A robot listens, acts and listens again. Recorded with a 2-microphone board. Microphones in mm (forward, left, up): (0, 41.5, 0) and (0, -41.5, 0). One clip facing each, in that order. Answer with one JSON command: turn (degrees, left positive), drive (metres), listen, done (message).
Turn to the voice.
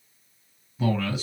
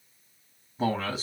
{"turn": -35}
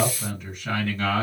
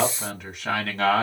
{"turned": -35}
{"turn": -115}
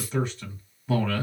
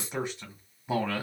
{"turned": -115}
{"turn": -20}
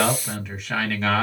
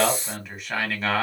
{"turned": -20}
{"done": "Found it: a man speaking, straight ahead."}